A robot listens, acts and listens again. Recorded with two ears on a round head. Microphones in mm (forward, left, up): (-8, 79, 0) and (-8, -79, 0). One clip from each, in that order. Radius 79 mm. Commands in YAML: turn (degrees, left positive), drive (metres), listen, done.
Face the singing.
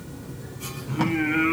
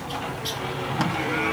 turn: 90
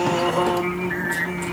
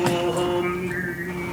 turn: 25
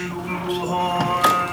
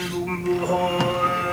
done: "Facing the singing."